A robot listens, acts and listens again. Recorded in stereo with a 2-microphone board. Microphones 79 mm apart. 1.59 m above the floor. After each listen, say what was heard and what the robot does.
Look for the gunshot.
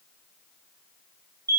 Keep listening.
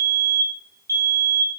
Keep listening.
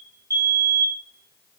I can't make out a gunshot to turn to.